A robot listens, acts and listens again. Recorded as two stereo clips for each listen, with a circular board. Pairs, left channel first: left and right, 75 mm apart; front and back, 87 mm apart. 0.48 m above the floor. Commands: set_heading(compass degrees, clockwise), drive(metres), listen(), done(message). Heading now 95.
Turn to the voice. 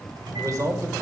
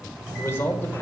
set_heading(155)
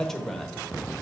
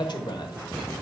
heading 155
done("Found it: a man speaking, straight ahead.")